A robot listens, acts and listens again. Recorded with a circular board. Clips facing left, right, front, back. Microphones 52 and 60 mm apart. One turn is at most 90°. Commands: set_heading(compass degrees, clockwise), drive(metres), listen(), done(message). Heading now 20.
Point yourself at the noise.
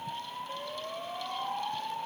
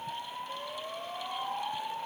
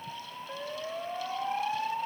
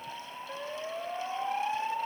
listen()
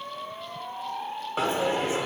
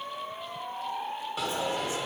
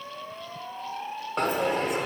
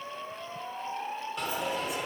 set_heading(345)
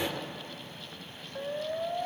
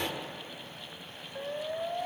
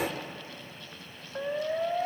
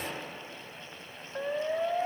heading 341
done("Facing the dropped coin, under 1 m away.")